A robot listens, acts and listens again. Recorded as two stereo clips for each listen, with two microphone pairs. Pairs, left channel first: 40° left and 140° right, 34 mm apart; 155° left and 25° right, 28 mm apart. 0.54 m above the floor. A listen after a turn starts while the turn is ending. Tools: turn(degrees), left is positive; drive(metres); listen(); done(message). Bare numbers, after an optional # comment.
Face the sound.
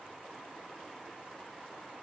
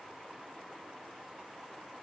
listen()
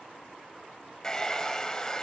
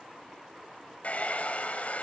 # The hair dryer: 115° left.
turn(115)
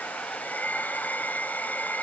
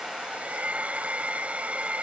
# The hair dryer is now 10° left.
turn(10)
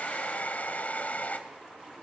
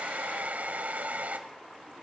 done("Facing the hair dryer.")